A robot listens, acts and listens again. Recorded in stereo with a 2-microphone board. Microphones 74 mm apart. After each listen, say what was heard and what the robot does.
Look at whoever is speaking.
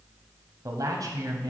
The man speaking: about 55° right or 125° right. Turn 55° right.
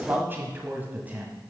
So it is at 20° right. Turn 20° right.
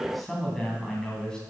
The man speaking is now 10° left. Turn 10° left.
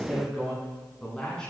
The man speaking is now 10° left. Turn 10° left.
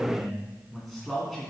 Found it: a man speaking, straight ahead.